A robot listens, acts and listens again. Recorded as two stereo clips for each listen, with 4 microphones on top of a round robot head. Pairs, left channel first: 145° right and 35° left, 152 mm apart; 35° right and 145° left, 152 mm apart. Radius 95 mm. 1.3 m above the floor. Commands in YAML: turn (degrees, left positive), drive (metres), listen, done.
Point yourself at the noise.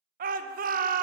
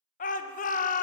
done: "Found it: a shout, straight ahead."